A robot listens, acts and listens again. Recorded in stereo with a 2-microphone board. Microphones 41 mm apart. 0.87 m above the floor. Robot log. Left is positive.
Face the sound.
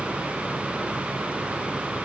cmd idle
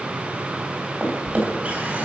note: The drawer: about 35° right or 145° right.
cmd yaw -35
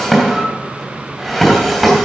end: Found it: a drawer, straight ahead, 2 to 4 m away.